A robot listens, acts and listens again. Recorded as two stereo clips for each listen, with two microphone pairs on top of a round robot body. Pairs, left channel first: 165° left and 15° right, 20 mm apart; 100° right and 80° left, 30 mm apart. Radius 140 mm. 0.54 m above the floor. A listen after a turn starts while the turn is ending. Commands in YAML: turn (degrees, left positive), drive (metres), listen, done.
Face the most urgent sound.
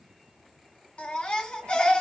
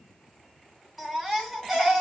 turn: 155
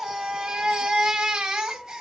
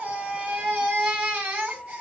turn: 40
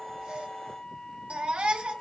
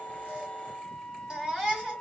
done: "Facing the baby crying, 2 to 4 m away."